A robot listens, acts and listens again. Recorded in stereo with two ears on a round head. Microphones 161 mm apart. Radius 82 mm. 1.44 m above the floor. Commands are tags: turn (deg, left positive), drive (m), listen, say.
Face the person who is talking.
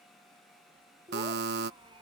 <turn deg="-25"/>
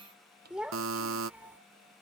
<turn deg="-10"/>
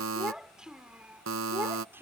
<turn deg="-15"/>
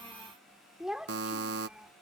<say>Found it: a child speaking, straight ahead.</say>